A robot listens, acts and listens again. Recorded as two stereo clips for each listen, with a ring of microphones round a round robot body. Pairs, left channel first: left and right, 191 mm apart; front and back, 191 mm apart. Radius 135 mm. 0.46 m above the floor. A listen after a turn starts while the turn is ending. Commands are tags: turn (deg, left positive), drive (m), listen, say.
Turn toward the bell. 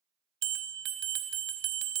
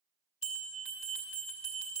<turn deg="-70"/>
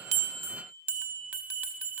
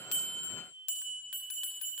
<turn deg="-10"/>
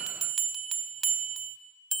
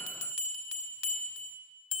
<say>Found it: a bell, straight ahead, under 1 m away.</say>